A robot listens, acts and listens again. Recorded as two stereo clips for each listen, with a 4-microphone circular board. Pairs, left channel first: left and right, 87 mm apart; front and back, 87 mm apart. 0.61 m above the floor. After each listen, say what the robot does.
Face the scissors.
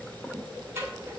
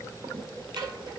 Turn 150° right.
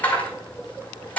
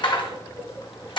Turn 20° left.
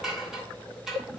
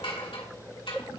Found it: scissors, straight ahead.